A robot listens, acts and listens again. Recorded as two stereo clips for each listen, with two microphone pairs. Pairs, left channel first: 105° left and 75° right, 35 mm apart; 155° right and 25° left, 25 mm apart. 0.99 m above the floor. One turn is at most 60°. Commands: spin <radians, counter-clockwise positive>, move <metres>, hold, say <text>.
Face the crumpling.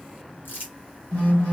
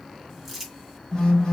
spin 1.05
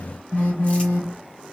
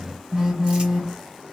spin 0.79
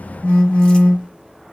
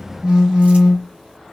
hold
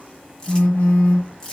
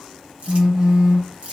spin 0.70
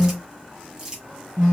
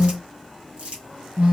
say Facing the crumpling, 1 to 2 m away.